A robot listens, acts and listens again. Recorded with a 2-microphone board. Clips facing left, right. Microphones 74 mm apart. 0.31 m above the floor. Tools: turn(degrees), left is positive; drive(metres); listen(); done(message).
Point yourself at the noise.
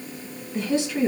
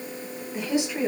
turn(degrees=-30)
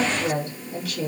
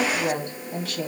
turn(degrees=-130)
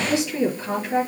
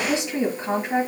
turn(degrees=-30)
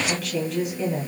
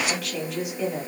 done("Found it: a woman speaking, straight ahead.")